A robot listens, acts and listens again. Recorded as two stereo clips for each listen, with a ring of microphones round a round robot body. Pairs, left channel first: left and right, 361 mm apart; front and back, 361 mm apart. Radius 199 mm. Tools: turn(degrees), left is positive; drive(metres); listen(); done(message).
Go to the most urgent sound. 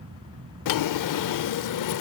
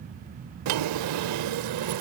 listen()
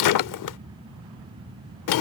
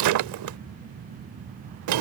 listen()
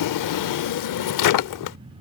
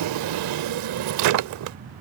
done("I can't make out anything urgent to turn to.")